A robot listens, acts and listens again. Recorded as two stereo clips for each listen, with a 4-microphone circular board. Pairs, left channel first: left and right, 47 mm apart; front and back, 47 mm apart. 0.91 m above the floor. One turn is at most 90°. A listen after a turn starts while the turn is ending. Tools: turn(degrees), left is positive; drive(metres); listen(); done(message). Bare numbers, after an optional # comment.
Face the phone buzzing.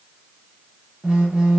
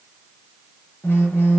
# The phone buzzing: 15° right.
turn(-15)
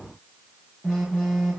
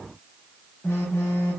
done("Found it: a phone buzzing, straight ahead, under 1 m away.")